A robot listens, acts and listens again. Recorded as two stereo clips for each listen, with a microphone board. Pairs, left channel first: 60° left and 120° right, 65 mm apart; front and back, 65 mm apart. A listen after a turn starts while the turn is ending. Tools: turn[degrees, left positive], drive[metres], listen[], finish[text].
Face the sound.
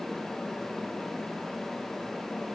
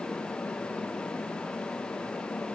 Action: listen[]
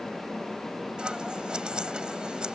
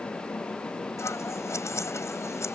Thought: The scissors: 40° right.
Action: turn[-40]
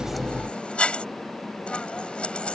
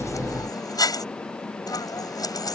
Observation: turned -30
Thought: The scissors is now 15° right.
Action: turn[-15]
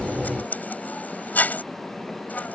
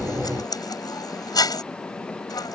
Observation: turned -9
Action: finish[Found it: scissors, straight ahead.]